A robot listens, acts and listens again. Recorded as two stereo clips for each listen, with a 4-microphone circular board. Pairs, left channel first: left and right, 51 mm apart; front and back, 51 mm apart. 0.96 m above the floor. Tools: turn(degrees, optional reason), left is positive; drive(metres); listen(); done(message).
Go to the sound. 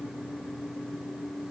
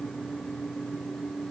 listen()
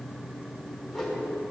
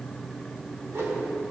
turn(degrees=170, reason="The whoosh: 170° left.")
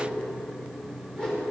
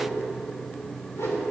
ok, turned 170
turn(degrees=20, reason="The whoosh is now 20° left.")
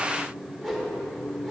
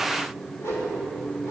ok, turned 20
drive(metres=1.0)
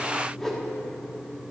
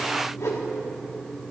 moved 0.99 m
drive(metres=1.0)
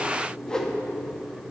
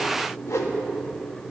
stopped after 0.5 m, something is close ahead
turn(degrees=15, reason="The whoosh is now 15° left.")
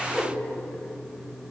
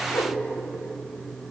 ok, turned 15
done("Arrived at the whoosh, straight ahead.")